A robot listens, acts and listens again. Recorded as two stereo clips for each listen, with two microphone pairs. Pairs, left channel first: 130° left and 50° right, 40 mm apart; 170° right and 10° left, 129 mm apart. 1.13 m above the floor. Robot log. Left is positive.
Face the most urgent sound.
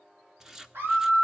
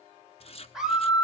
note: The scream: 75° right.
cmd yaw -75
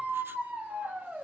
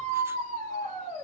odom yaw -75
note: The scream is now 10° right.
cmd yaw -10
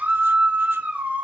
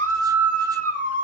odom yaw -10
end: Facing the scream.